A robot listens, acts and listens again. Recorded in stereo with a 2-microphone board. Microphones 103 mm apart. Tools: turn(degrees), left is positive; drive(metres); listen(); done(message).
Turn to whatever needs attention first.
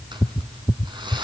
listen()
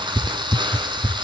listen()
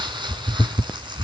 done("I can't make out anything urgent to turn to.")